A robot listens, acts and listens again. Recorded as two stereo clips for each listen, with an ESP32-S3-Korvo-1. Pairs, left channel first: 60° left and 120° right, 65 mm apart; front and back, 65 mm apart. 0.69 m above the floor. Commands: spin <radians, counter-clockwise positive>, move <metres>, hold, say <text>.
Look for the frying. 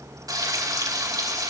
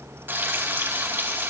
spin -2.18
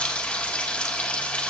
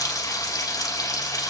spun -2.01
spin -0.17
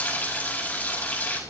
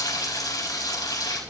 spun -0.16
say Facing the frying.